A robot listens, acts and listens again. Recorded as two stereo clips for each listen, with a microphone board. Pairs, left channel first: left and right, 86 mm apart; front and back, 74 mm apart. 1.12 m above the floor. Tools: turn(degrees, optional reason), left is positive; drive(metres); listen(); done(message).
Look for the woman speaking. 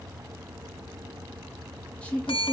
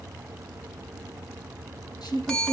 turn(degrees=15, reason="The woman speaking: 15° left.")
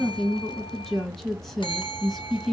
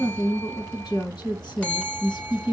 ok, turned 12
done("Found it: a woman speaking, straight ahead, 1 to 2 m away.")